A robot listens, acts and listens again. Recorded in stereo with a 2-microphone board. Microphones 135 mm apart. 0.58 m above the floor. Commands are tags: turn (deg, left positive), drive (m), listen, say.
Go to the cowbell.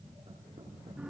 <listen/>
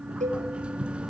<turn deg="-65"/>
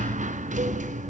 <listen/>
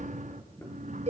<turn deg="-50"/>
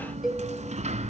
<drive m="1.0"/>
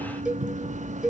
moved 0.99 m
<drive m="1.0"/>
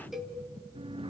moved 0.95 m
<drive m="1.0"/>
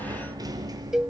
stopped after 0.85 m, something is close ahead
<say>Arrived at the cowbell, straight ahead.</say>